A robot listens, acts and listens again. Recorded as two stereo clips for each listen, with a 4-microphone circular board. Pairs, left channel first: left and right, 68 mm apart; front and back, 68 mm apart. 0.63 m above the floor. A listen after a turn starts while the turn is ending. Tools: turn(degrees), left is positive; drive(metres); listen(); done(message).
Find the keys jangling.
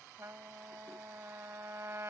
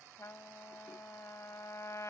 listen()
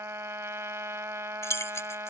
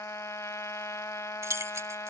turn(degrees=135)
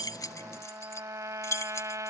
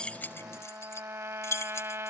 turn(degrees=45)
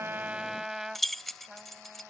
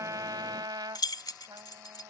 done("Facing the keys jangling.")